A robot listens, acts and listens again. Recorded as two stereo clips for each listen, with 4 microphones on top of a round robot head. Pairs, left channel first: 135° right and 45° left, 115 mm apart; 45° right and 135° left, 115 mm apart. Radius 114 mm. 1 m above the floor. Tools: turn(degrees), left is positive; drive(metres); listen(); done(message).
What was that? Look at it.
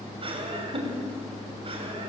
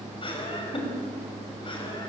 done("Facing the laughter, over 4 m away.")